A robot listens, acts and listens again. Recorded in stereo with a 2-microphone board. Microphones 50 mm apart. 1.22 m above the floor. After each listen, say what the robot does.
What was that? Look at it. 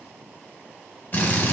Turn 45° left.
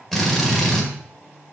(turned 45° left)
Found it: a drill, straight ahead, 1 to 2 m away.